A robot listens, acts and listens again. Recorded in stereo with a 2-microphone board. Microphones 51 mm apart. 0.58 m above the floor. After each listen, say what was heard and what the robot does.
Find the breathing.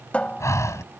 The breathing: about 75° left or 105° left. Turn 75° left.
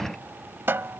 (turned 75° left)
Found it: breathing, straight ahead.